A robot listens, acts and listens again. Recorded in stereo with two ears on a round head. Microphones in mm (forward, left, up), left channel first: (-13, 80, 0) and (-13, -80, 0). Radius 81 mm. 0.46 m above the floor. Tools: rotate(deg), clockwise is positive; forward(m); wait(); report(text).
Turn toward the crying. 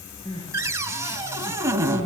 rotate(-25)
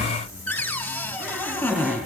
wait()
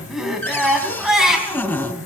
report("Found it: crying, straight ahead.")